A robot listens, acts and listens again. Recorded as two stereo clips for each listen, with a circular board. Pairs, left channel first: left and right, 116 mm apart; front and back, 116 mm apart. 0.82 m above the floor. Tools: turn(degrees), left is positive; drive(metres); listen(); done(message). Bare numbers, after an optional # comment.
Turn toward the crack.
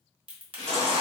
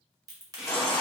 # The crack: 125° right.
turn(-125)
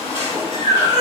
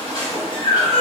done("Facing where the crack came from. I can't hear it now.")